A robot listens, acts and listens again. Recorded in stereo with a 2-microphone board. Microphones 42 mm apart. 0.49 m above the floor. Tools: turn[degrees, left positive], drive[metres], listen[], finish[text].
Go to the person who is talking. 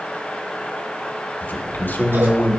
Thought: The man speaking: about 60° left or 120° left.
Action: turn[60]
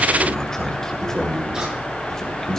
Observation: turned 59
Thought: So it is at 15° left.
Action: turn[15]
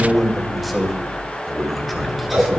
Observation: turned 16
Action: drive[1.0]
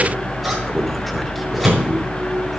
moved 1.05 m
Action: listen[]
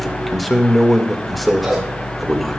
Action: drive[1.0]
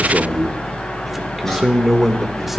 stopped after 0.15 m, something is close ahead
Action: finish[Arrived at the man speaking, straight ahead.]